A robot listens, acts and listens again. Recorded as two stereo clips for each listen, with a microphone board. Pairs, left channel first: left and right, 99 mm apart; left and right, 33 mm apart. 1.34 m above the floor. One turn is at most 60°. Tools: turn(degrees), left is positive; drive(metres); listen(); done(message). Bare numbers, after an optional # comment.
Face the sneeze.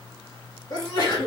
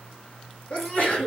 # The sneeze: about 45° left or 135° left.
turn(45)
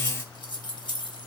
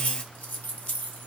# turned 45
listen()
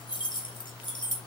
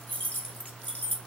done("I heard a sneeze, but can't make it out now. It was about straight ahead or 90° left.")